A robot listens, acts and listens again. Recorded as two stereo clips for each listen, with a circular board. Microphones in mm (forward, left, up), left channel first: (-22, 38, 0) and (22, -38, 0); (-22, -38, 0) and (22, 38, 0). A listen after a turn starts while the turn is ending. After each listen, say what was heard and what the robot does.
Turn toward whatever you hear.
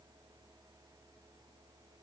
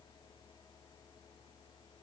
Keep listening.
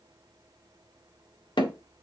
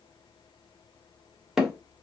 The hammering: 145° left. Turn 145° left.
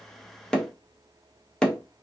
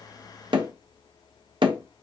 The hammering is now 40° left. Turn 40° left.
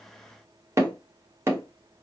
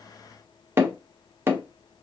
Found it: hammering, straight ahead, under 1 m away.